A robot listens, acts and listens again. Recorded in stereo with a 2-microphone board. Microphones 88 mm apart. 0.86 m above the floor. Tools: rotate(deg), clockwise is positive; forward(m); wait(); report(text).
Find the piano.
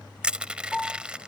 rotate(-30)
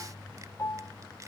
rotate(-145)
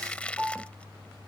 rotate(10)
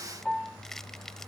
report("Found it: a piano, straight ahead.")